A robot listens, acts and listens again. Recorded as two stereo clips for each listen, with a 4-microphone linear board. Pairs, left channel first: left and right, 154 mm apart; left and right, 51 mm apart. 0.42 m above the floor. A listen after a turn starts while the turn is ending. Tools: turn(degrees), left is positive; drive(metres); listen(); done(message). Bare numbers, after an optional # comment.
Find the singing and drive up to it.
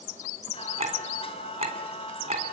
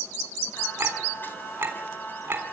# The singing: about 40° left or 140° left.
turn(40)
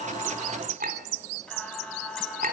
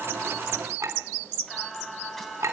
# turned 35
drive(1.0)
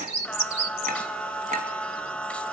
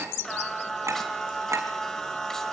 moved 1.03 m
# The singing is now 10° left.
turn(10)
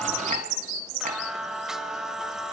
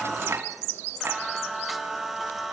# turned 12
drive(1.0)
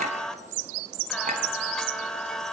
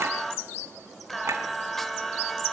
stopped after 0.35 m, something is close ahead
done("Arrived at the singing, straight ahead.")